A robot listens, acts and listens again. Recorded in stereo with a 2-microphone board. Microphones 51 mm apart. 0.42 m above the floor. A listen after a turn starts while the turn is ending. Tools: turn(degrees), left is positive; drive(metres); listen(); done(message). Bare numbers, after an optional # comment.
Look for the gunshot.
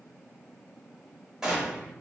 turn(-30)
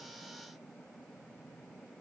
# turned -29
listen()
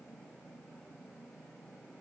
done("I heard a gunshot, but can't make it out now. It was about 20° left or 140° right.")